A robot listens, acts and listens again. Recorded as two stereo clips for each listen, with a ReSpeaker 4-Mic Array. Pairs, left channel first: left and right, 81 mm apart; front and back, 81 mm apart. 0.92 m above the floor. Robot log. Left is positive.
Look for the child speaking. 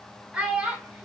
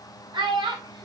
note: The child speaking: 165° right.
cmd yaw -165
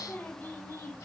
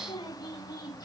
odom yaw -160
note: The child speaking is now 25° left.
cmd yaw +25
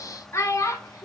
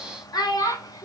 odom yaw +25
note: The child speaking is now 40° left.
cmd yaw +40
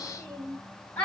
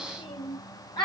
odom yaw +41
note: The child speaking is now 20° left.
cmd yaw +20
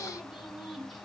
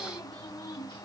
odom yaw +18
end: Found it: a child speaking, straight ahead, 1 to 2 m away.